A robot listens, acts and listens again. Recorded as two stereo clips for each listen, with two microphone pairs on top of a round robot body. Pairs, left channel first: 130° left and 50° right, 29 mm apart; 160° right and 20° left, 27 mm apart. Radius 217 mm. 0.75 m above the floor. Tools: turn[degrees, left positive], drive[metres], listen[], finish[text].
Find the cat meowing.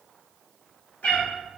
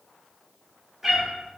Thought: The cat meowing: 105° left.
Action: turn[105]
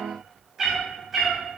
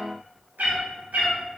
Thought: The cat meowing is now 35° left.
Action: turn[35]
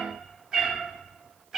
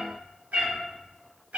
Thought: The cat meowing is now 35° left.
Action: turn[35]
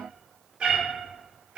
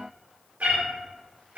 Thought: The cat meowing is now 15° left.
Action: turn[15]
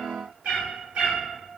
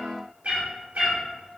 Action: finish[Facing the cat meowing.]